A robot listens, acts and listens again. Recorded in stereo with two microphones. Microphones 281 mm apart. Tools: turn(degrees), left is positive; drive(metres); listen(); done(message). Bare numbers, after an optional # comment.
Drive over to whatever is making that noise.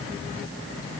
listen()
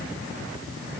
listen()
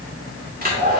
# The hair dryer: about 30° right or 150° right.
turn(-30)
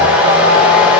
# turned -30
drive(1.0)
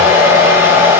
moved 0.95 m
# The hair dryer is now 10° right.
turn(-10)
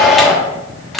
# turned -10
drive(1.0)
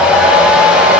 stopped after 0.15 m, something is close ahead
done("I am next to the hair dryer.")